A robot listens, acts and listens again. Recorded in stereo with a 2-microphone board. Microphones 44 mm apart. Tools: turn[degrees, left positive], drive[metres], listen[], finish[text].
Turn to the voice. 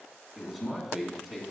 Action: turn[-30]
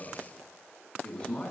Thought: So it is at 20° left.
Action: turn[20]
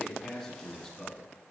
Action: finish[Found it: a man speaking, straight ahead, 1 to 2 m away.]